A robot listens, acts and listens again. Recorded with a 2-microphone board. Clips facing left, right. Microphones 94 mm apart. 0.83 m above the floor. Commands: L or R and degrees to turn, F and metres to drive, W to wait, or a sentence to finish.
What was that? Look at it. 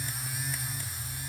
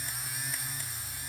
W
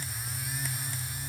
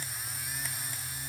W
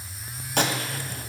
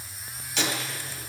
L50
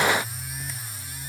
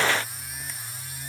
W
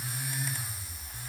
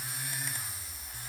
I heard a gunshot, but can't make it out now. It was about straight ahead or 80° left.